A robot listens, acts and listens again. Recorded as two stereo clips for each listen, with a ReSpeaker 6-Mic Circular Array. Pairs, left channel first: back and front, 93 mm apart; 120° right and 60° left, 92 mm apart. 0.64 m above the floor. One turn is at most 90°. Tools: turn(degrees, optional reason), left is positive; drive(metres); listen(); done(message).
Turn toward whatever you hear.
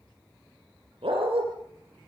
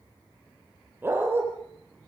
done("Facing the dog barking, over 4 m away.")